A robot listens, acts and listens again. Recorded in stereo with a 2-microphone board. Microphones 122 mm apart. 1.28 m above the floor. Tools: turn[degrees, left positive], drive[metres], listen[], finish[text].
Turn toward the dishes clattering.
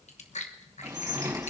Thought: The dishes clattering: about 25° right or 155° right.
Action: turn[-25]
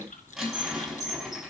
Action: finish[Facing the dishes clattering.]